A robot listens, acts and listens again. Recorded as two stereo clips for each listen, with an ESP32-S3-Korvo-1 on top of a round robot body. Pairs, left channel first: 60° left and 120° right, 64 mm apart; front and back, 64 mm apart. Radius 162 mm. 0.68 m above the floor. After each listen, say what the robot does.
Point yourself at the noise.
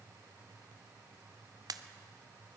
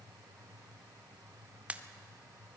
Turn 110° right.
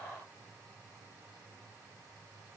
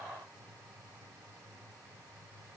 I heard a pop from this way, but can't make it out now.